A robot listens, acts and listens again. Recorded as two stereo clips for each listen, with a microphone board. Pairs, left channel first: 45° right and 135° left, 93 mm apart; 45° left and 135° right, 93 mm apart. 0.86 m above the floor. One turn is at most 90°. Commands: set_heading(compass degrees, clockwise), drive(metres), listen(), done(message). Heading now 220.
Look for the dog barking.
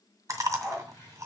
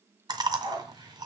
set_heading(310)
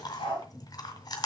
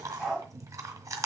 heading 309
set_heading(354)
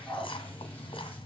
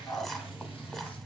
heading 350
done("Facing the dog barking.")